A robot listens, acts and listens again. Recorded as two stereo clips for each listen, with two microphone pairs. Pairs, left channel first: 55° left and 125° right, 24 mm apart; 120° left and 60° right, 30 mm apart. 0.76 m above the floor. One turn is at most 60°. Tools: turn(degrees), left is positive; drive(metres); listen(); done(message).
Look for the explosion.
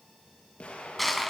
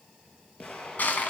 turn(degrees=60)
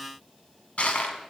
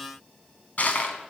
turn(degrees=20)
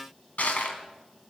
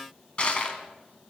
done("I heard an explosion from this way, but can't make it out now.")